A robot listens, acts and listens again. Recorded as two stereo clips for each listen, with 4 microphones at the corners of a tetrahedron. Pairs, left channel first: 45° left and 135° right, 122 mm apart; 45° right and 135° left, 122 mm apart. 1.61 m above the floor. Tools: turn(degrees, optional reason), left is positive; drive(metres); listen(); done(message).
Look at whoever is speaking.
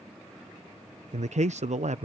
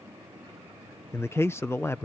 turn(degrees=-115, reason="The man speaking: 115° right.")
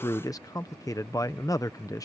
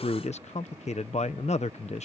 turn(degrees=-15, reason="The man speaking is now 15° right.")
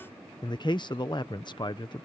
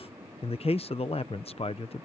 done("Facing the man speaking.")